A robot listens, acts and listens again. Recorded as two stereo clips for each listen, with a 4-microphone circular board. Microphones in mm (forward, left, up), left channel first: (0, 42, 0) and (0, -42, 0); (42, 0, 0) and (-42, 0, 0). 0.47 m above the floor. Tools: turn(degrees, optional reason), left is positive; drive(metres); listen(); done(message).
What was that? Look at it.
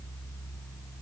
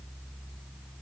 listen()
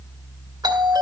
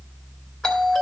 turn(degrees=-80, reason="The doorbell: 80° right.")
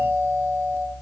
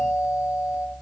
turn(degrees=-40, reason="The doorbell is now 40° right.")
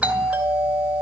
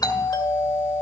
turn(degrees=-20, reason="The doorbell is now 20° right.")
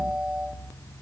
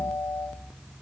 done("Found it: a doorbell, straight ahead, 2 to 4 m away.")